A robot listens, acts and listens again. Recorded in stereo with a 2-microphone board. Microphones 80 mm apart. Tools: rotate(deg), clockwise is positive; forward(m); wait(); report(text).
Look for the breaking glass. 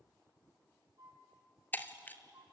rotate(-25)
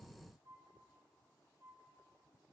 wait()
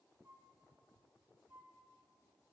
report("I heard breaking glass, but can't make it out now. It was about straight ahead or 130° left.")